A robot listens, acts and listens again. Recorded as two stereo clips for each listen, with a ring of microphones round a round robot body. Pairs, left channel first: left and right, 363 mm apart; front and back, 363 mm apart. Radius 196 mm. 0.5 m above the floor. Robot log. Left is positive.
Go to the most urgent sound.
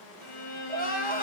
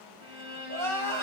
note: The crying: 155° left.
cmd yaw +155
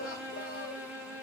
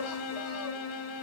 cmd idle
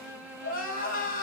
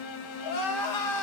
note: The crying is now 30° left.
cmd yaw +30
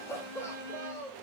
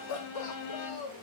note: The crying is now 10° left.
cmd yaw +10
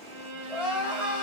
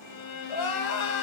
cmd fwd 1.0
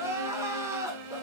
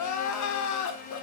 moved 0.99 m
note: The crying is now 10° right.
cmd yaw -10
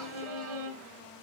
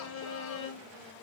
cmd idle
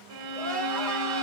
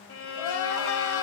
cmd idle
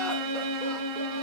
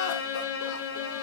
end: I heard crying from this way, but can't make it out now. I did not reach it.